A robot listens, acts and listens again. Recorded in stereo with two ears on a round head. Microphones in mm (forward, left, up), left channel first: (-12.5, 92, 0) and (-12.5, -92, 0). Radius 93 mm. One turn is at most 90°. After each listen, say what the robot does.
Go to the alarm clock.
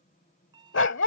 Turn 20° right.
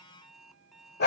Drive 1.0 m forward.
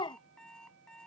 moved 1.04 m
Drive 1.0 m forward.
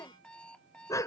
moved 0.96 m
Drive 1.0 m forward.
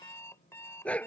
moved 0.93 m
Turn 15° left.
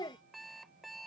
Drive 1.0 m forward.
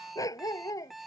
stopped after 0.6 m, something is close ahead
Arrived at the alarm clock, straight ahead.